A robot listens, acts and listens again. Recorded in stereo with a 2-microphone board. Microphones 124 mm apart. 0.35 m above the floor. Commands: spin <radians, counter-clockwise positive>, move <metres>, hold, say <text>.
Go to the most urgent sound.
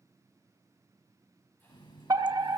spin -0.52
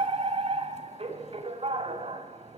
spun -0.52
spin -1.92
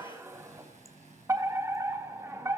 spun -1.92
spin -0.52
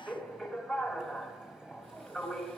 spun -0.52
move 1.0
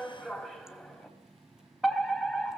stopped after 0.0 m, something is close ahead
say Something is in my way. I am facing the fire alarm but have not reached it.